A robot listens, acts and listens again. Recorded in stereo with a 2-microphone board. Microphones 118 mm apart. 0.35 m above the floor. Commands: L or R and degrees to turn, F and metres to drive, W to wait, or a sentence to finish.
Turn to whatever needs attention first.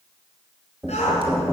L75
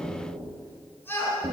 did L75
L20
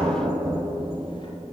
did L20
W
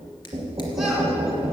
W
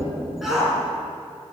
Facing the shout.